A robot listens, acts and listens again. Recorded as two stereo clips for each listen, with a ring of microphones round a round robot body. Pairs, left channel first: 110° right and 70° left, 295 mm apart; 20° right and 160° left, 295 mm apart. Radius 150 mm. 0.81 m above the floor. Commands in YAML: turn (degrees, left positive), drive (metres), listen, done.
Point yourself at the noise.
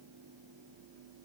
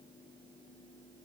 listen: true
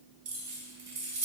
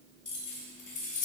turn: 40
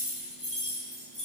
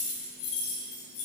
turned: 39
done: "Found it: keys jangling, straight ahead, 2 to 4 m away."